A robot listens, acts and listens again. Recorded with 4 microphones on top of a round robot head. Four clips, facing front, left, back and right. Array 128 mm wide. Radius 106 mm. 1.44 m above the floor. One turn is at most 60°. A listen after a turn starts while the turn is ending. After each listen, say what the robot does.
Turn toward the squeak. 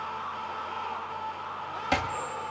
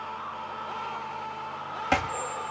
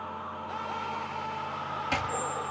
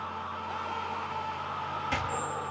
Turn 60° right.
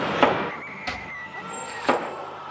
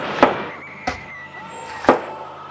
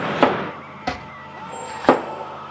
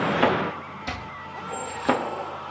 Turn 60° right.
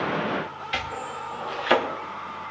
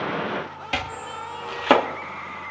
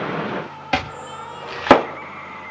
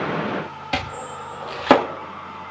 Turn 15° right.
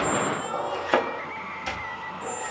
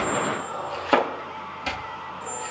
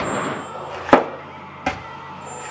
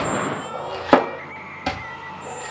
Found it: a squeak, straight ahead, over 4 m away.